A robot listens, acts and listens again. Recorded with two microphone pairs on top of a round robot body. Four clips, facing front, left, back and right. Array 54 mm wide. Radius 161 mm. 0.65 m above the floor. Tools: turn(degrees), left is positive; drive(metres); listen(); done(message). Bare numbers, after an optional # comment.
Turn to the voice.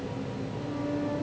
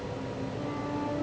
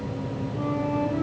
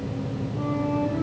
listen()
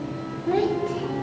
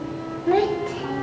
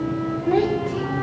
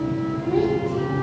# The child speaking: 105° left.
turn(105)
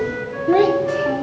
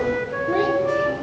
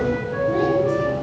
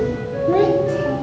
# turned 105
# The child speaking is now 15° right.
turn(-15)
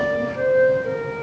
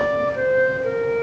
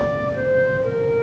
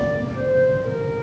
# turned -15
listen()
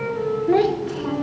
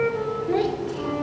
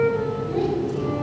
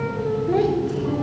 done("Facing the child speaking, 2 to 4 m away.")